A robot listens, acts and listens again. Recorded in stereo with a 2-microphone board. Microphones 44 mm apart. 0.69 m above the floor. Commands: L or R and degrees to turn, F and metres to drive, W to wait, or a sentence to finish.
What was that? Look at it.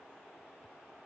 W
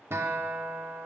R65
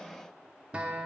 R30
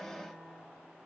L10
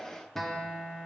Facing the guitar, under 1 m away.